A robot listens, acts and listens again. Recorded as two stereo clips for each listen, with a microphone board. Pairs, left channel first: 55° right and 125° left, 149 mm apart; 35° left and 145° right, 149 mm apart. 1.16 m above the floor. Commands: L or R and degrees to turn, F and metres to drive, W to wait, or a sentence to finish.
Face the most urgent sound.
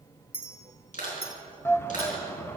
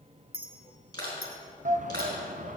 R130
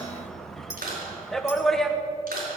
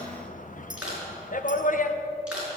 L30
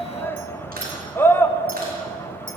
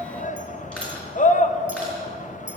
L15
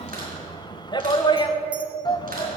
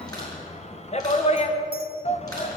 Facing the shout.